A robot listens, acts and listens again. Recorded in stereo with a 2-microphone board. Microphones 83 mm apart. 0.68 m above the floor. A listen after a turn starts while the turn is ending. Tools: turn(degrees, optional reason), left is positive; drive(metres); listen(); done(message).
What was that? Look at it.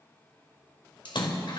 turn(degrees=75, reason="The splash: about 75° left or 105° left.")
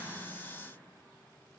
listen()
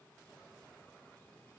done("I heard a splash, but can't make it out now. It was about straight ahead or 30° left.")